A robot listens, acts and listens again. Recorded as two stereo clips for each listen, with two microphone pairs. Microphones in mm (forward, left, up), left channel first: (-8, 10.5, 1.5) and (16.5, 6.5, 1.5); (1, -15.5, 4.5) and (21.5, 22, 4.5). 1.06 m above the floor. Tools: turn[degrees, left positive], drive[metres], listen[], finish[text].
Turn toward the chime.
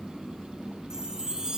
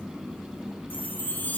Thought: The chime: 75° right.
Action: turn[-75]
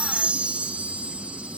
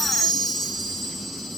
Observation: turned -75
Thought: The chime is now 35° right.
Action: turn[-35]
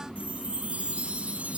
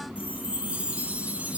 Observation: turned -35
Action: finish[Facing the chime.]